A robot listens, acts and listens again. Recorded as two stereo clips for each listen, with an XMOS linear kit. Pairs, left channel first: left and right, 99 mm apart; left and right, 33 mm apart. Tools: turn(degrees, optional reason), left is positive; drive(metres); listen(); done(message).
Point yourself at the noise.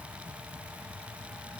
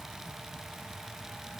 listen()
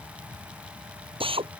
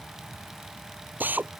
turn(degrees=-65, reason="The drill: about 65° right or 115° right.")
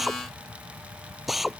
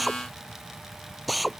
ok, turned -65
done("Facing the drill.")